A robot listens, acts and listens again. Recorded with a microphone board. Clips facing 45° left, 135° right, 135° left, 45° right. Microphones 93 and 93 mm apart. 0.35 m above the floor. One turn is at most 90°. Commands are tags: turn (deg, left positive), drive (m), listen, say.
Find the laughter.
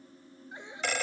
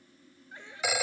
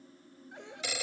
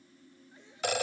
<turn deg="90"/>
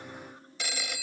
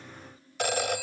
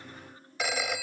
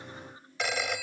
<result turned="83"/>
<turn deg="30"/>
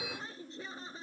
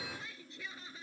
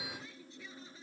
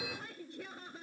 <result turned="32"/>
<turn deg="-10"/>
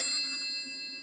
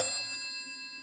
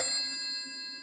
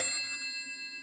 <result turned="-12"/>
<listen/>
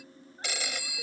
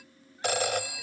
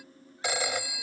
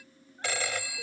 <listen/>
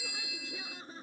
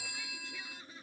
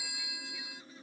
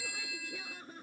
<turn deg="-10"/>
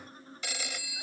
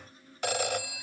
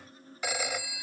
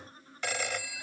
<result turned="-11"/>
<listen/>
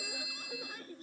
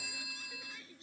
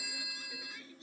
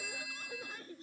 <say>Found it: laughter, straight ahead.</say>